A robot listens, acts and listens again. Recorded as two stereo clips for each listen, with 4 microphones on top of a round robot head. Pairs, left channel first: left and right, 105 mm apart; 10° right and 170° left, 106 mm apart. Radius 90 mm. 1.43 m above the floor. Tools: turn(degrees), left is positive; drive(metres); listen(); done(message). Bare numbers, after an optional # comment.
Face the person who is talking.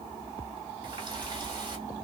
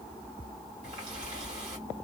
listen()
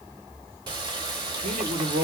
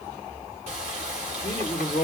# The man speaking: 75° right.
turn(-75)
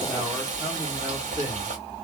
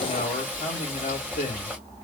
# The man speaking is now 20° right.
turn(-20)
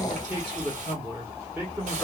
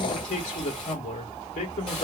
done("Facing the man speaking, 1 to 2 m away.")